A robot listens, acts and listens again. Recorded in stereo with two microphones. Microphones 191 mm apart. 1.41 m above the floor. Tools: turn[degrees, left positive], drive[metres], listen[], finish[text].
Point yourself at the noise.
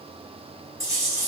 Thought: The chewing: about 15° right or 165° right.
Action: turn[-15]
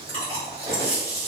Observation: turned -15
Thought: So it is at 150° right.
Action: turn[-150]
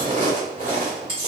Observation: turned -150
Thought: The chewing is now 30° right.
Action: turn[-30]
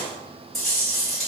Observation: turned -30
Action: finish[Facing the chewing, 1 to 2 m away.]